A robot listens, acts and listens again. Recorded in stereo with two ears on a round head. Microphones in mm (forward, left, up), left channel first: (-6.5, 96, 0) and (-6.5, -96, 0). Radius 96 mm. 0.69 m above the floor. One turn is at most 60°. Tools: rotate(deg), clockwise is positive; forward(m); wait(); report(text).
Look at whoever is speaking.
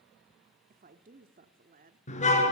rotate(40)
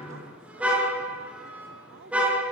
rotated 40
rotate(60)
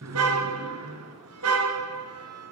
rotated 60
rotate(30)
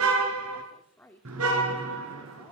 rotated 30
rotate(-10)
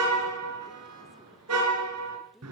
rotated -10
wait()
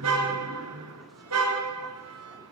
wait()
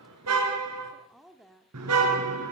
report("Facing the woman speaking.")